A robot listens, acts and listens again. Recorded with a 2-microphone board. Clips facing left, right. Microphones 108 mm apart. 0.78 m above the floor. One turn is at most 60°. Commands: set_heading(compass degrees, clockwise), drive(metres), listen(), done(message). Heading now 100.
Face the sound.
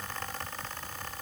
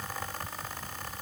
listen()
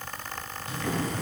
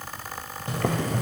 set_heading(160)
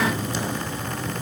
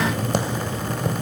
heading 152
set_heading(212)
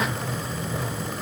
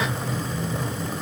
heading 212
done("Facing the boiling, 2 to 4 m away.")